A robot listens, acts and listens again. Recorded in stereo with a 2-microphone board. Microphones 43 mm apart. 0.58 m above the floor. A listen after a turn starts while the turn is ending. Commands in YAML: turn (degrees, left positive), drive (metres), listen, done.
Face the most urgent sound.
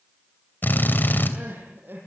turn: -55
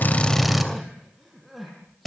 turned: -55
done: "Found it: crying, straight ahead."